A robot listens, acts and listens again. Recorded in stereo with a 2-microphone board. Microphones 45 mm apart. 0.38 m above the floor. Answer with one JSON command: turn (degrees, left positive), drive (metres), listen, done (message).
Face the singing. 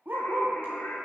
{"turn": 65}
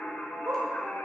{"turn": 55}
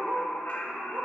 {"turn": 50}
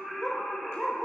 {"done": "Found it: singing, straight ahead, 2 to 4 m away."}